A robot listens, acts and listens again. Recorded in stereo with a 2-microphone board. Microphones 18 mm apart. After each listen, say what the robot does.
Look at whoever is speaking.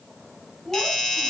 Turn 30° left.
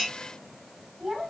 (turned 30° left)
Turn 20° right.
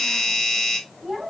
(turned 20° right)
Found it: a child speaking, straight ahead.